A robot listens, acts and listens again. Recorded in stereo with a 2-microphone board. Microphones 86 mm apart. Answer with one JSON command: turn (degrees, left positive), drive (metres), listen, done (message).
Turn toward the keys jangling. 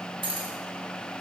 {"turn": -75}
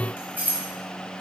{"turn": -20}
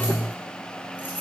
{"listen": true}
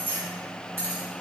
{"turn": -30}
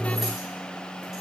{"listen": true}
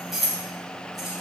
{"done": "Found it: keys jangling, straight ahead, 2 to 4 m away."}